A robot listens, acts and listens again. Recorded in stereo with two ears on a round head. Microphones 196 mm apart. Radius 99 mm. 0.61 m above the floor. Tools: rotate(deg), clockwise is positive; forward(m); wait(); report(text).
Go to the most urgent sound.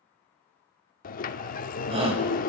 rotate(30)
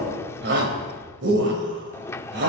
rotate(120)
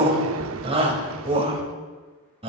rotate(25)
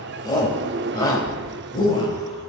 rotate(-20)
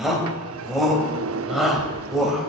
forward(1.0)
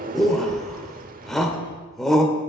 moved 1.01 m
forward(1.0)
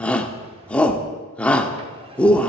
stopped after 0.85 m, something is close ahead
report("I am next to the shout.")